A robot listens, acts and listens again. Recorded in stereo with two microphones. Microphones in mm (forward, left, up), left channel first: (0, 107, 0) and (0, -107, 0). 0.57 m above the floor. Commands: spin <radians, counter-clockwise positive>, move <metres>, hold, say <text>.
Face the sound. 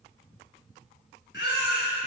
spin 1.05
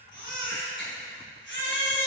spin 1.05
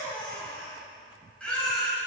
say Facing the baby crying, 1 to 2 m away.